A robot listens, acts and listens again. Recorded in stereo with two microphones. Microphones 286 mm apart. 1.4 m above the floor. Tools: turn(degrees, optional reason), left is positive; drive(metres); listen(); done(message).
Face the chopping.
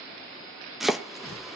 turn(degrees=30)
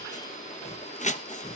turn(degrees=150, reason="So it is at 150° left.")
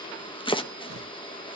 turn(degrees=20, reason="The chopping is now 20° left.")
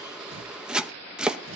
done("Found it: chopping, straight ahead, under 1 m away.")